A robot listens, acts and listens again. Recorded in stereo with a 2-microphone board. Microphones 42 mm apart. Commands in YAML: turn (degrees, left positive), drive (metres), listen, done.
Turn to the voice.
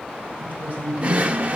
turn: -40
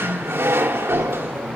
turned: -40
listen: true
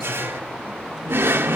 listen: true
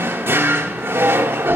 done: "I heard a woman speaking, but can't make it out now. It was about straight ahead or 100° right."